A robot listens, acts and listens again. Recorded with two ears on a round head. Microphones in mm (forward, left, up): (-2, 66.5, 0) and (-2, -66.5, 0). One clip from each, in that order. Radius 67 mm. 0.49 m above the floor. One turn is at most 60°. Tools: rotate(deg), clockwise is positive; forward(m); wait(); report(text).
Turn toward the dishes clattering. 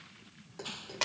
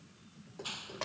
rotate(-35)
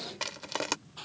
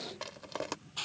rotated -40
wait()
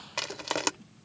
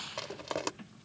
wait()
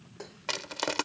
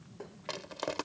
rotate(-60)
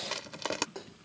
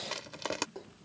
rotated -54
rotate(-50)
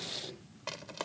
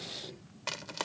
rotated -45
wait()
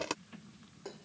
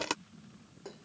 report("Found it: dishes clattering, straight ahead.")